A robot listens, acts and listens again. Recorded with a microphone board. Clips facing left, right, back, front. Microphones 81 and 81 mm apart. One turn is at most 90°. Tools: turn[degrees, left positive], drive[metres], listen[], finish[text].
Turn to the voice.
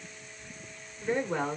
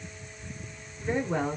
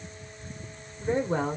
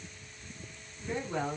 Thought: The woman speaking: 160° right.
Action: turn[-90]
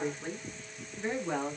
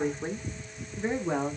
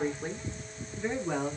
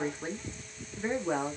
Thought: The woman speaking is now 30° right.
Action: turn[-30]
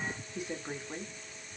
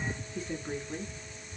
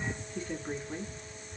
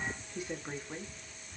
Thought: The woman speaking is now 80° left.
Action: turn[80]
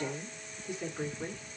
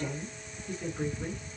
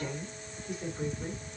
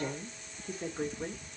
Thought: The woman speaking is now 15° left.
Action: turn[15]
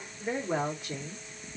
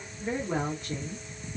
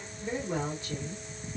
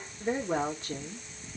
Action: finish[Found it: a woman speaking, straight ahead.]